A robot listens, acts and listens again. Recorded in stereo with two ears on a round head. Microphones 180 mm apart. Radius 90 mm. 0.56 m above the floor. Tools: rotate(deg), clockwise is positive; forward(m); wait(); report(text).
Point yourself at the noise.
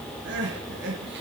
rotate(60)
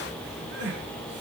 rotate(60)
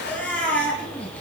report("Found it: crying, straight ahead, 2 to 4 m away.")